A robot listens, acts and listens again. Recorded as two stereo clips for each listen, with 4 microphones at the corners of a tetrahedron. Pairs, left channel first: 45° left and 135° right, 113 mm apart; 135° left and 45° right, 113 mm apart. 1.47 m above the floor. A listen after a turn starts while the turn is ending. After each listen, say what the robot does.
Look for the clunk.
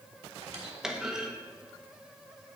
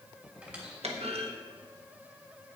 Turn 50° right.
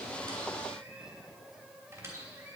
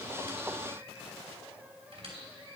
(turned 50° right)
I heard a clunk from this way, but can't make it out now.